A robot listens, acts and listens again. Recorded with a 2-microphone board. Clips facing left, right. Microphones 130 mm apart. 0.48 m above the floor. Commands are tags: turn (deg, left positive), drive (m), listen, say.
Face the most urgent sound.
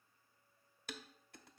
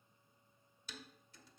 <listen/>
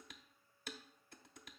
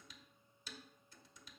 <listen/>
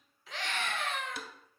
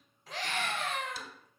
<turn deg="-45"/>
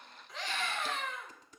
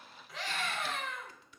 <say>Facing the scream, 2 to 4 m away.</say>